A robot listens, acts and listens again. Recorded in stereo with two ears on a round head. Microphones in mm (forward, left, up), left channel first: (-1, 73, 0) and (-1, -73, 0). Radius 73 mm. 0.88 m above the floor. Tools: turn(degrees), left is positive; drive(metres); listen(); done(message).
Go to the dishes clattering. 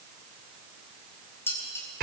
turn(degrees=15)
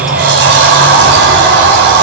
listen()
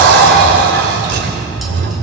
listen()
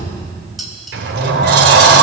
drive(metres=1.0)
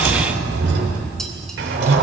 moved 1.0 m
listen()
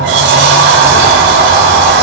listen()
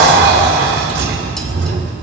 done("I heard dishes clattering from this way, but can't make it out now. I did not reach it.")